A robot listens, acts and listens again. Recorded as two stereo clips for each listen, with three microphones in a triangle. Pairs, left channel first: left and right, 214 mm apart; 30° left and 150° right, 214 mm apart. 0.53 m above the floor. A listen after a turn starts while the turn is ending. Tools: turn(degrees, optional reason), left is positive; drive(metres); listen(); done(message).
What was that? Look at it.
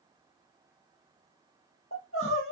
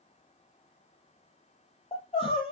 turn(degrees=95, reason="The crying: 95° left.")
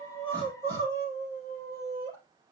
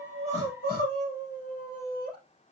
turn(degrees=-20, reason="The crying is now 20° right.")
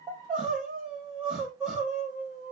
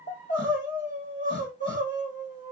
done("Found it: crying, straight ahead, 2 to 4 m away.")